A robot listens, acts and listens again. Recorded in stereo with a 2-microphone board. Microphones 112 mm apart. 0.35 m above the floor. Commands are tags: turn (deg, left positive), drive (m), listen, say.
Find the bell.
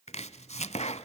<listen/>
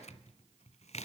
<listen/>
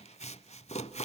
<say>I can't make out a bell to turn to.</say>